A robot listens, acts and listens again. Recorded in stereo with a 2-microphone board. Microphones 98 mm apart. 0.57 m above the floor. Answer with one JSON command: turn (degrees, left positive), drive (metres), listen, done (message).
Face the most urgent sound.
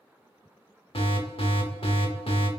{"turn": 65}
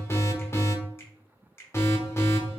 {"turn": 30}
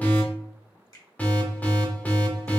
{"turn": 20}
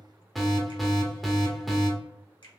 {"done": "Facing the alarm, under 1 m away."}